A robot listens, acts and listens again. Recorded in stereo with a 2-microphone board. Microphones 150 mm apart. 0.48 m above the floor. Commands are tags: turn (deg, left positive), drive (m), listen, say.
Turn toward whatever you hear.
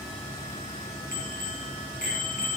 <turn deg="90"/>
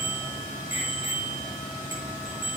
<turn deg="-15"/>
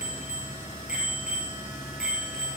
<say>Facing the bicycle bell.</say>